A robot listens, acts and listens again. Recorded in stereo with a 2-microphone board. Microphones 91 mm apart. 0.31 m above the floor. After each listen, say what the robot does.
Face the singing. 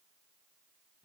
Keep listening.
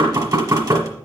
Keep listening.
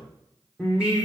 Turn 30° right.
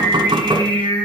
Turn 10° left.
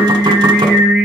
Turn 10° right.
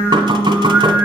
Turn 20° right.
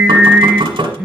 Found it: singing, straight ahead.